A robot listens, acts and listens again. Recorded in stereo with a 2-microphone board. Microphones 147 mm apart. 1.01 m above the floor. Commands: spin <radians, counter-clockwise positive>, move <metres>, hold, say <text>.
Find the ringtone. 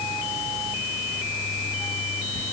hold
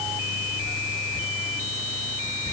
hold
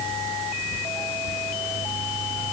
say I can't make out a ringtone, only whispering.